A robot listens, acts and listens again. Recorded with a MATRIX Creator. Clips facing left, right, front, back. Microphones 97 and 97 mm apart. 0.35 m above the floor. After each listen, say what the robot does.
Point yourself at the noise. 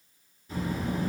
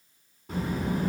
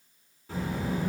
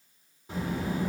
Turn 110° right.
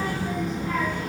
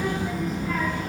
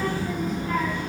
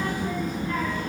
Facing the child speaking.